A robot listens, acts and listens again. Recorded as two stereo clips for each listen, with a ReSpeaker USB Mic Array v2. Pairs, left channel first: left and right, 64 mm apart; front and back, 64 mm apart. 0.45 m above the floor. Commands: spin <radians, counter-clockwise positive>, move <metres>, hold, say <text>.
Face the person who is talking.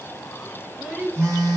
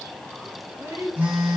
spin -2.79
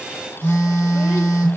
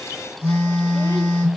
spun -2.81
hold
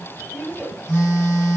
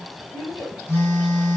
say Facing the child speaking, 2 to 4 m away.